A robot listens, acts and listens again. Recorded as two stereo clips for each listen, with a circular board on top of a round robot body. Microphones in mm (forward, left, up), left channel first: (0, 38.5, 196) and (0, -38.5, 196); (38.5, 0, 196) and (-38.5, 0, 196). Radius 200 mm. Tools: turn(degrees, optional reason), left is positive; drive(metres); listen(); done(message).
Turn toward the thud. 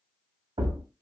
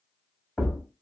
turn(degrees=-85, reason="The thud: 85° right.")
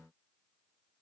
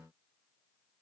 done("Facing where the thud came from. I can't hear it now.")